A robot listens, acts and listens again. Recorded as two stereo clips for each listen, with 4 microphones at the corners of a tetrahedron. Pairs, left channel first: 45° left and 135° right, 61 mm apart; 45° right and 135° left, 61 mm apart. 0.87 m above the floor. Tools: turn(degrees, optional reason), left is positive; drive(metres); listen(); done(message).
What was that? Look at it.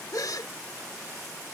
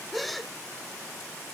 turn(degrees=45, reason="The gasp: 45° left.")
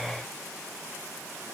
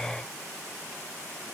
done("Facing where the gasp came from. I can't hear it now.")